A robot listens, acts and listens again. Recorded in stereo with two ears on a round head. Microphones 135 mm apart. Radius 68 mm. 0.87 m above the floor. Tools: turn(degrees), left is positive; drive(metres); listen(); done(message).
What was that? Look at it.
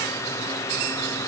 listen()
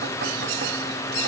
listen()
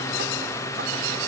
done("I can't make out anything.")